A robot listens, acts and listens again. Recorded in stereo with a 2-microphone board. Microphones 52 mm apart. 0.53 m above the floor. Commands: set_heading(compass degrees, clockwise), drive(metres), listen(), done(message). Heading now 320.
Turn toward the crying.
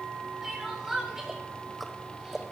set_heading(350)
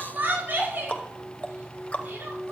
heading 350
set_heading(125)
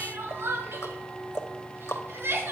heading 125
set_heading(185)
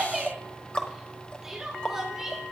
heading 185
set_heading(195)
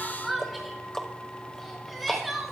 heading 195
done("Found it: crying, straight ahead.")